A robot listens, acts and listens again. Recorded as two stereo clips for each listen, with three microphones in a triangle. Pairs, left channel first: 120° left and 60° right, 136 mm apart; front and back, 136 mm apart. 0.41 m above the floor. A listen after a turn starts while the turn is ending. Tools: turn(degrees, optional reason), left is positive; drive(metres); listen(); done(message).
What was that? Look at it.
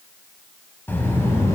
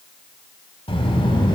turn(degrees=50, reason="The child speaking: 50° left.")
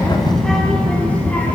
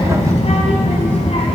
turn(degrees=40, reason="The child speaking is now 40° left.")
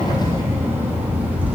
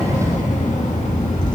turn(degrees=15, reason="The child speaking is now 15° left.")
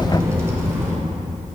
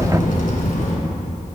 turn(degrees=10, reason="The child speaking is now 10° left.")
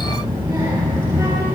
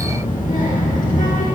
done("Facing the child speaking, 2 to 4 m away.")